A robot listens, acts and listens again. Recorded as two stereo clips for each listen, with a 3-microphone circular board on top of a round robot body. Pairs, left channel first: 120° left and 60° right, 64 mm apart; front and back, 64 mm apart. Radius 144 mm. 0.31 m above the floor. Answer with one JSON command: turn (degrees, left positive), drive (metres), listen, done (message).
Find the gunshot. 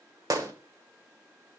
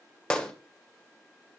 {"turn": -70}
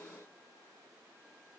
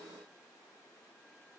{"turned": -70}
{"done": "I heard a gunshot from this way, but can't make it out now."}